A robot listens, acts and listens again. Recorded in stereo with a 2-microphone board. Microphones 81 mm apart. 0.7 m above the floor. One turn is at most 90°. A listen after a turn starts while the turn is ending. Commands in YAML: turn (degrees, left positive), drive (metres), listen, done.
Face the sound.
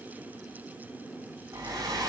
turn: -45
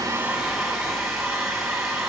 done: "Facing the hair dryer."